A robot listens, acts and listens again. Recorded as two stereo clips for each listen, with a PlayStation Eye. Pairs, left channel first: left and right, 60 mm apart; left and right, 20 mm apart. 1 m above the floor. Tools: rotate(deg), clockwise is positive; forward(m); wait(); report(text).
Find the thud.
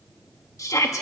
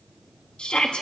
wait()
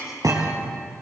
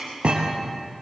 rotate(90)
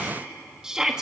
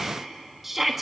report("Facing where the thud came from. I can't hear it now.")